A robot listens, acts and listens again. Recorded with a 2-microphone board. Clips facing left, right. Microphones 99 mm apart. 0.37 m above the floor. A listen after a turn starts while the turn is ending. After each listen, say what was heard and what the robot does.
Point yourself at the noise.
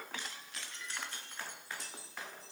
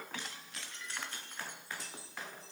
Keep listening.
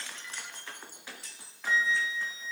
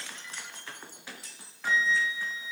The flute: about 70° right or 110° right. Turn 70° right.
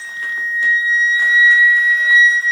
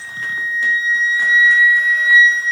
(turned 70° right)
Found it: a flute, straight ahead.